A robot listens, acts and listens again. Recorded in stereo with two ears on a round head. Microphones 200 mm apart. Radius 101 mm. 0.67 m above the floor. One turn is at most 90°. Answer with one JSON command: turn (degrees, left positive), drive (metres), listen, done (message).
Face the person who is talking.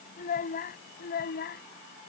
{"turn": 45}
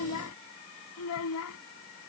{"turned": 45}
{"turn": 75}
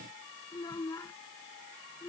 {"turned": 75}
{"turn": 10}
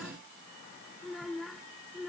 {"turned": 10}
{"done": "Facing the child speaking."}